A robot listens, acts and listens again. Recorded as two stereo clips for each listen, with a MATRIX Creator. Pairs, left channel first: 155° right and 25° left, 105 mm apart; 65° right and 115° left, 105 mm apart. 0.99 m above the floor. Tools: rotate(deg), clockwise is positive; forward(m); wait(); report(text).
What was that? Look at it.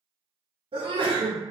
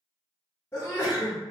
report("Found it: a sneeze, straight ahead.")